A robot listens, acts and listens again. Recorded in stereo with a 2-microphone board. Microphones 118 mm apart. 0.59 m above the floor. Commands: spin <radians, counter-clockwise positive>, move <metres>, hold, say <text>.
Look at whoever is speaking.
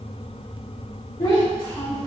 spin 0.79
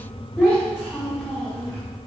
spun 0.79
spin 0.26
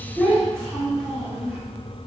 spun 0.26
say Found it: a child speaking, straight ahead.